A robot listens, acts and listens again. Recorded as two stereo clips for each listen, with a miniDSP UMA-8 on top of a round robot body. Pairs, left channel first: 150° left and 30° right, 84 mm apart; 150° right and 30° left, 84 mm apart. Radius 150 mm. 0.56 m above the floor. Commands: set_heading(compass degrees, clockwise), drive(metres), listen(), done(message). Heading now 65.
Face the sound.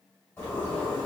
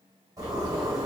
set_heading(340)
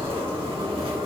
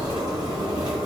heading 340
done("Facing the zipper, 1 to 2 m away.")